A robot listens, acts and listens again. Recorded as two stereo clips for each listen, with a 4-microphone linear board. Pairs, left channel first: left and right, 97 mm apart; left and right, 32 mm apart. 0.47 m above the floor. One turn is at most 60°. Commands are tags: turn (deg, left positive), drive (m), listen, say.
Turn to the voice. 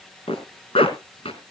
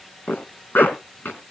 <listen/>
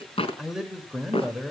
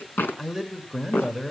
<turn deg="-30"/>
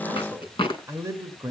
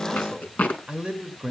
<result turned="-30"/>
<turn deg="-60"/>
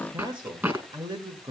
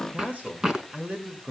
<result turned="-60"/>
<turn deg="-60"/>
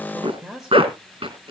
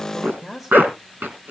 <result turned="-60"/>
<say>Facing the man speaking, 1 to 2 m away.</say>